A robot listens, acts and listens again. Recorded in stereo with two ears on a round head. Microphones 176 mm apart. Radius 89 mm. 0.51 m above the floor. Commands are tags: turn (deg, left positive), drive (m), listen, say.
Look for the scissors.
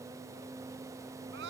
<listen/>
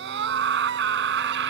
<listen/>
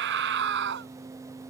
<say>I can't make out scissors to turn to.</say>